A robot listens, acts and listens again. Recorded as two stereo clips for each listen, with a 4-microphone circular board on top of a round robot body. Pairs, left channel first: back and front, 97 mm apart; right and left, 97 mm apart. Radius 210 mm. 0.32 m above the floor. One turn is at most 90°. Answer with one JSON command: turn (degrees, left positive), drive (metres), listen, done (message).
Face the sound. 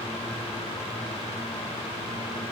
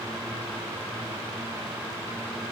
{"listen": true}
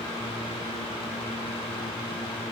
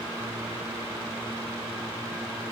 {"listen": true}
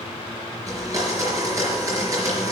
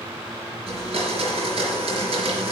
{"turn": 60}
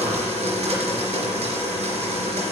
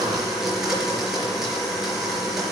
{"done": "Found it: a blender, straight ahead."}